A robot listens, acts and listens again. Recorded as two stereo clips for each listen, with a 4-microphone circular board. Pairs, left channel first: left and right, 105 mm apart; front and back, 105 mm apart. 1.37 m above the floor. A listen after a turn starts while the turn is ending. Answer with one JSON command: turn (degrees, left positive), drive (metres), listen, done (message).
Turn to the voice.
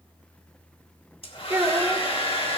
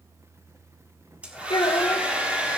{"turn": -30}
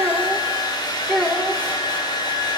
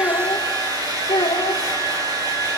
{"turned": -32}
{"done": "Found it: a child speaking, straight ahead."}